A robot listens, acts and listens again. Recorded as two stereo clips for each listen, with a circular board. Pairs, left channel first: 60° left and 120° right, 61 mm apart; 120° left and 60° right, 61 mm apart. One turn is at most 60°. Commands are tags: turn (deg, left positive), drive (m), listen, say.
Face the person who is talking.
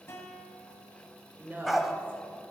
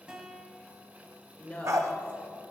<turn deg="-60"/>
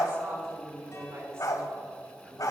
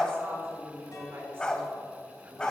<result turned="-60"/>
<turn deg="-60"/>
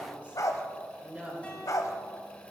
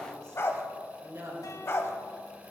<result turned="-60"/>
<turn deg="-60"/>
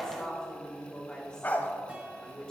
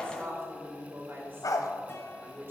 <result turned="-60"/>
<turn deg="-15"/>
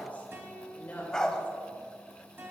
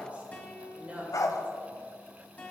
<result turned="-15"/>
<say>Facing the woman speaking.</say>